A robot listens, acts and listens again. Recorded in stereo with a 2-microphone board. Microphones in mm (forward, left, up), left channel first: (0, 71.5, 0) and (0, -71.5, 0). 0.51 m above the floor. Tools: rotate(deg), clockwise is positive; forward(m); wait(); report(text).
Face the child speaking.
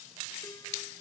wait()
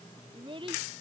rotate(40)
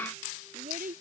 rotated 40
rotate(105)
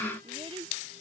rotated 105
rotate(40)
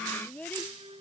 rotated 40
rotate(-10)
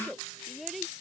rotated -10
report("Found it: a child speaking, straight ahead.")